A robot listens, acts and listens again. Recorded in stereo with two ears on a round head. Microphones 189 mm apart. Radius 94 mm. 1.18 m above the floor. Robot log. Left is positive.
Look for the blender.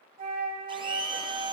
note: The blender: about 20° right or 160° right.
cmd yaw -20
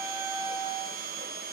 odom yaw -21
note: So it is at 140° right.
cmd yaw -140
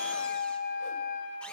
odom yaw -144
cmd idle
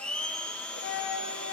end: Found it: a blender, straight ahead, under 1 m away.